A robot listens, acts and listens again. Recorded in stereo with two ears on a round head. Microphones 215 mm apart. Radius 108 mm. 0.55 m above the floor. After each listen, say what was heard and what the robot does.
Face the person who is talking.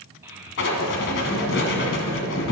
Turn 30° right.
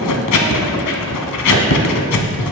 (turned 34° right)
Keep listening.
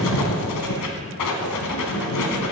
Keep listening.
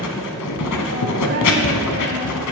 I heard a child speaking, but can't make it out now. It was about 25° left or 135° right.